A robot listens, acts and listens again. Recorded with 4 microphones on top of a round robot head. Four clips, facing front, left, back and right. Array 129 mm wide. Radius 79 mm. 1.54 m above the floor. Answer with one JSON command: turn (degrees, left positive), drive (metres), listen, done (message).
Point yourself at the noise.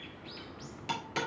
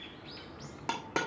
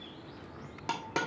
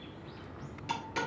{"turn": 120}
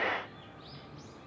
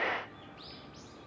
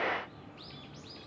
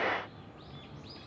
{"done": "I heard a dropped coin from this way, but can't make it out now."}